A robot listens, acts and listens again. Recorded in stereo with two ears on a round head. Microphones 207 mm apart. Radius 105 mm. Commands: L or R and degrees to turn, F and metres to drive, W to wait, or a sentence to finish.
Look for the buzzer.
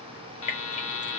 L60
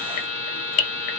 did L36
L35
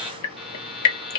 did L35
Facing the buzzer, 1 to 2 m away.